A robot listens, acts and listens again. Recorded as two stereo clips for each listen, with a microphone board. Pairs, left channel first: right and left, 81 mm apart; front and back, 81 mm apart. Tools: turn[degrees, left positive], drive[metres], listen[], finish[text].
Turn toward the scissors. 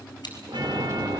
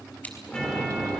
Thought: The scissors: 65° right.
Action: turn[-65]
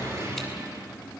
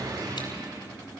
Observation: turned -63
Action: listen[]
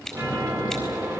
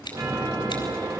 Action: finish[Facing the scissors, over 4 m away.]